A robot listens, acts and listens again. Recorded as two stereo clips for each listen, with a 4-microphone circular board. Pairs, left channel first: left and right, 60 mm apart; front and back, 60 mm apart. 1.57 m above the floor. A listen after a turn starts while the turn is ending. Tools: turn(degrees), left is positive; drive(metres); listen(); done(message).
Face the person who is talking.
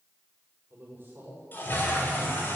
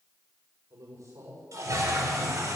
turn(degrees=-145)
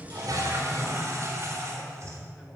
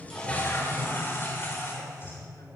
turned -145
listen()
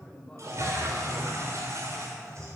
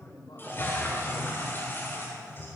turn(degrees=15)
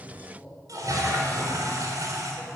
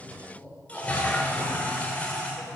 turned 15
done("Found it: a man speaking, straight ahead.")